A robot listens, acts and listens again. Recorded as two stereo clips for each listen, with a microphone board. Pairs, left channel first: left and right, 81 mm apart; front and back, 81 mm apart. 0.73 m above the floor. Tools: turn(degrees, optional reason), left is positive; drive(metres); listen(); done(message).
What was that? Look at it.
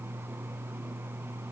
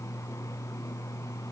listen()
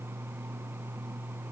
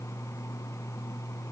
listen()
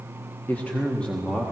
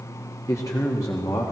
turn(degrees=10, reason="The man speaking: 10° left.")
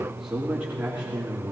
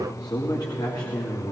turn(degrees=-20, reason="The man speaking is now 20° right.")
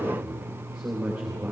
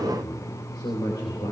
done("Facing the man speaking, 2 to 4 m away.")